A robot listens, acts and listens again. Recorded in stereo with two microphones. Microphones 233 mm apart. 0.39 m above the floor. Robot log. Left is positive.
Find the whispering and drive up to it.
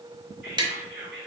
note: The whispering: about 50° right or 130° right.
cmd yaw -50
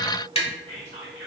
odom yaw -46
note: So it is at 70° right.
cmd yaw -70
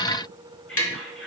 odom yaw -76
cmd fwd 1.0
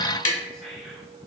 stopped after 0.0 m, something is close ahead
end: Something is in my way. I am facing the whispering but have not reached it.